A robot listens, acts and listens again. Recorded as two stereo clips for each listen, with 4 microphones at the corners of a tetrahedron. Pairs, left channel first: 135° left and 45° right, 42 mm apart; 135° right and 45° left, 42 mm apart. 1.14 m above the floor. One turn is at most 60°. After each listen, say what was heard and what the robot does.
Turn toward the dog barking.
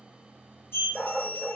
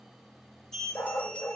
The dog barking: 135° right. Turn 60° right.
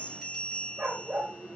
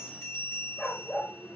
The dog barking is now 80° right. Turn 60° right.
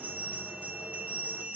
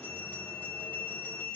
Nothing new. It was at 20° right. Turn 20° right.
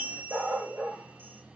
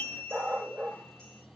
The dog barking is now 15° right. Turn 15° right.
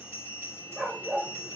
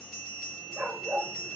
Facing the dog barking, 2 to 4 m away.